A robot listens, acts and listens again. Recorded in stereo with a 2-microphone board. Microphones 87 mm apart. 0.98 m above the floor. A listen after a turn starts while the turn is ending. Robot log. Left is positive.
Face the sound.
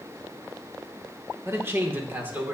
note: The man speaking: about 20° right or 160° right.
cmd yaw -20
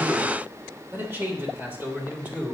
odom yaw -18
note: The man speaking: about 20° right or 160° right.
cmd yaw -20
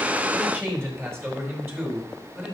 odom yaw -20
note: The man speaking: about 25° right or 155° right.
cmd yaw -25
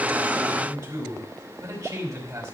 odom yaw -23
note: So it is at 130° right.
cmd yaw -130
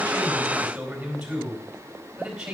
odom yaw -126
end: Facing the man speaking.